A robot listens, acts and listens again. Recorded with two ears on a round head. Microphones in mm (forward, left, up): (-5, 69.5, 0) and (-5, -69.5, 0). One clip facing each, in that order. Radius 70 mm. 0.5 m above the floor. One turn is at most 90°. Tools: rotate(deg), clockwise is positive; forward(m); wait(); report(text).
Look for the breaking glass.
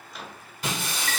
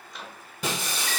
rotate(90)
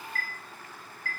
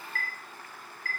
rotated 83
report("I heard breaking glass from this way, but can't make it out now.")